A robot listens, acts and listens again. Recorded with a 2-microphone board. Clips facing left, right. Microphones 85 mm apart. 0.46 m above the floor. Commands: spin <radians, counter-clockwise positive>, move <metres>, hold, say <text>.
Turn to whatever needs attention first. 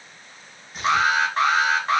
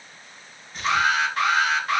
spin 0.52
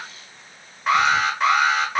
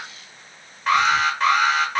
say Found it: an alarm, straight ahead, under 1 m away.